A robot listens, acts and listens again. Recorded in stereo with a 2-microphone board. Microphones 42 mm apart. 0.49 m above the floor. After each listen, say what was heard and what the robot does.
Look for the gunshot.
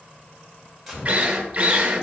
Turn 30° right.
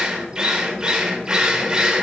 Keep listening.
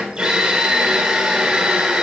I heard a gunshot, but can't make it out now. It was about 25° left or 145° right.